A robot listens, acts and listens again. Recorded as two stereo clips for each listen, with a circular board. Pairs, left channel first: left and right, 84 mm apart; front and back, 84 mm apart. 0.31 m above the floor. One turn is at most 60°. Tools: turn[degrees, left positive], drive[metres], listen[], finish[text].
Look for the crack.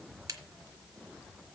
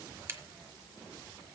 Thought: The crack: 125° right.
Action: turn[-60]
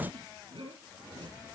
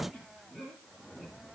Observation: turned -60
Thought: Nothing new. It was at 65° right.
Action: turn[-60]
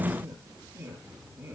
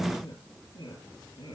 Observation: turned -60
Action: finish[I heard a crack from this way, but can't make it out now.]